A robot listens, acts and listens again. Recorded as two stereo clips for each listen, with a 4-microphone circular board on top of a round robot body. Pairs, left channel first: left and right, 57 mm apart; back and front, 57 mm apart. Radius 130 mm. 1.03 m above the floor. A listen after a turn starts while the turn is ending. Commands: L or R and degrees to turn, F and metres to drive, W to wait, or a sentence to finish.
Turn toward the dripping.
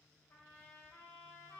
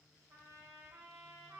W
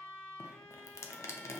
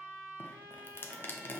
L130
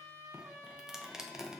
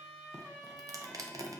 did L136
R10
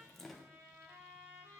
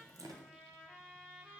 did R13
Facing the dripping, under 1 m away.